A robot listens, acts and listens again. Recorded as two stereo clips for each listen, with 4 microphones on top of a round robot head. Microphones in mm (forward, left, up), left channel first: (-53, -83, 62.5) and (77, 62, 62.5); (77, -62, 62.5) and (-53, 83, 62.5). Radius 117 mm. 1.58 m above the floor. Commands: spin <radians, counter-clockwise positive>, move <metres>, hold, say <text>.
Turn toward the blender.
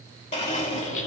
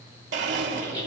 spin 2.97
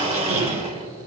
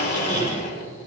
spin -0.17
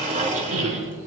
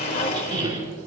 say Found it: a blender, straight ahead, 2 to 4 m away.